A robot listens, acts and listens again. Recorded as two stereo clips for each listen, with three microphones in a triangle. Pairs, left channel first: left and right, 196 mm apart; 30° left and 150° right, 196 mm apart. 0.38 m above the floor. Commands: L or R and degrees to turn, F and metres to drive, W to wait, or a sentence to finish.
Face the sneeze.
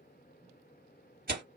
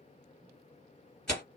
W
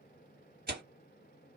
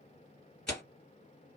W
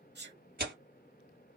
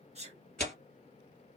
R100
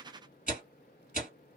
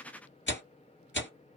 I heard a sneeze from this way, but can't make it out now.